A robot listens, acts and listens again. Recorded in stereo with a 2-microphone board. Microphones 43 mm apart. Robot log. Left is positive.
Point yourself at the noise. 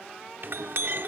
note: The clink: about 60° right or 120° right.
cmd yaw -60
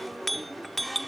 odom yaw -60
end: Facing the clink.